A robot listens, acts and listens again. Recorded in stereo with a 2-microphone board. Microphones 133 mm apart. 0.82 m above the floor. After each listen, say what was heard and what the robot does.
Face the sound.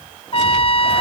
The trumpet: about 45° left or 135° left. Turn 45° left.
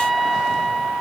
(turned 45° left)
Facing the trumpet.